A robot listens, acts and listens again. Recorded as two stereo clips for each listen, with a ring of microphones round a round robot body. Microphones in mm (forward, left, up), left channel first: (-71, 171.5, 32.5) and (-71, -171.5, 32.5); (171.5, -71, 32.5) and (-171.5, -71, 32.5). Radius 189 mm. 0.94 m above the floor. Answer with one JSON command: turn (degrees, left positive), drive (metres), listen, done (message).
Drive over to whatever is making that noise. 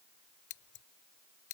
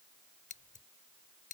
{"turn": 70}
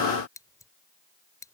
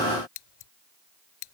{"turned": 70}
{"turn": 10}
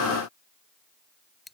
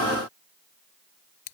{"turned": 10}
{"drive": 1.0}
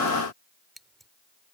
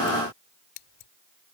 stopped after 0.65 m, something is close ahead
{"done": "Blocked. The scissors is further on, straight ahead."}